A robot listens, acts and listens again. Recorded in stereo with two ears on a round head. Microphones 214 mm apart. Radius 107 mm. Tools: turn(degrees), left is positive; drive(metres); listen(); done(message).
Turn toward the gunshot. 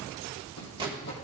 turn(degrees=-20)
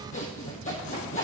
listen()
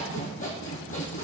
done("I heard a gunshot, but can't make it out now. It was about straight ahead or 140° right.")